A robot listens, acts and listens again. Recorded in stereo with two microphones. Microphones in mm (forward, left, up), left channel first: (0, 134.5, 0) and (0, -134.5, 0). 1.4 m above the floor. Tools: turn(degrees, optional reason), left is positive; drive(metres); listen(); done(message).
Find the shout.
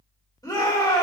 turn(degrees=30)
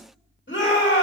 turn(degrees=135, reason="So it is at 135° left.")
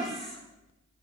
listen()
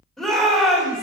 done("Facing the shout, 2 to 4 m away.")